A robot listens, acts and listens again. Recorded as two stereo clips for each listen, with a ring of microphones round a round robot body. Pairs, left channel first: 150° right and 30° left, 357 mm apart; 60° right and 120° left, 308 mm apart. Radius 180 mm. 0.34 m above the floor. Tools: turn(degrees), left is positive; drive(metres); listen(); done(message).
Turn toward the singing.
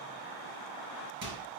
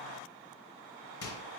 listen()
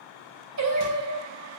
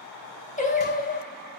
done("Facing the singing, 2 to 4 m away.")